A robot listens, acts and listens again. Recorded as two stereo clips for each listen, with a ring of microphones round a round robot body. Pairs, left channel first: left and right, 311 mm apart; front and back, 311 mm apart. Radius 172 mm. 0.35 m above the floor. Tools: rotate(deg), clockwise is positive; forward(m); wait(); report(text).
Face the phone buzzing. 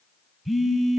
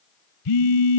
report("Found it: a phone buzzing, straight ahead.")